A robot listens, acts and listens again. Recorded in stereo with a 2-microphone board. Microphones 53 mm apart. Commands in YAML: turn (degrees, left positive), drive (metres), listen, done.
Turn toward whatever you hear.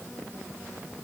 listen: true
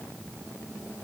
listen: true
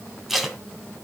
turn: 30
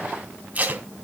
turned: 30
turn: -35
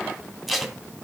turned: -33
done: "Facing the tape being pulled."